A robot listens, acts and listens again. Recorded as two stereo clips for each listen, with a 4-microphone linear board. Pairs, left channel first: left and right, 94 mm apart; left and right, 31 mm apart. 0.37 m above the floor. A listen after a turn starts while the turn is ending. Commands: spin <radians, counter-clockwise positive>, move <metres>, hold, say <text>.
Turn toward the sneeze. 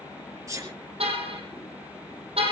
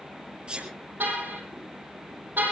spin -0.61
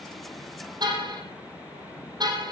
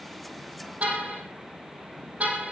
hold
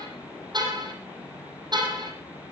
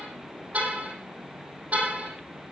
say I heard a sneeze, but can't make it out now. It was about straight ahead or 110° right.